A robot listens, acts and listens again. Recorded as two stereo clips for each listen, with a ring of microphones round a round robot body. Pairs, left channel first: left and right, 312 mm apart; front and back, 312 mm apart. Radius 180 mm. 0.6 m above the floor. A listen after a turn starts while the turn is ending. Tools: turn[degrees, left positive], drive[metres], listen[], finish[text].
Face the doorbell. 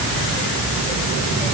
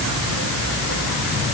Action: listen[]
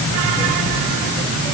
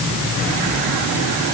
Action: listen[]
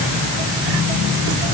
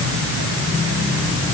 Action: finish[I can't make out a doorbell to turn to.]